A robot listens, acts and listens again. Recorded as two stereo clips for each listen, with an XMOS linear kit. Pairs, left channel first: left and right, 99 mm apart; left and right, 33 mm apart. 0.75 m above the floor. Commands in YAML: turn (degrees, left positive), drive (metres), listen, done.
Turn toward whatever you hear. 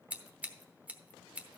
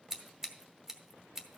turn: -30
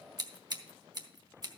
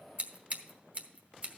turn: -135
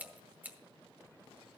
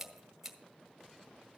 turn: -15
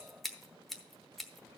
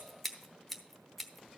done: "Facing the scissors."